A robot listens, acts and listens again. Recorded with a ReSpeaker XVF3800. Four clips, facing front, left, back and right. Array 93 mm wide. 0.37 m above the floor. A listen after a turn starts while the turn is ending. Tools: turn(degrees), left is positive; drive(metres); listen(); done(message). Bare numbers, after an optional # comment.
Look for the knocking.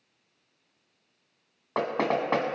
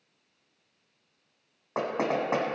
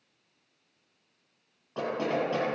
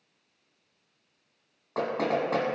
# The knocking: 20° left.
turn(20)
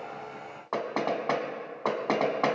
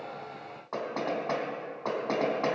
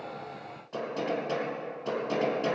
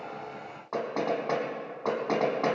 done("Found it: knocking, straight ahead, 1 to 2 m away.")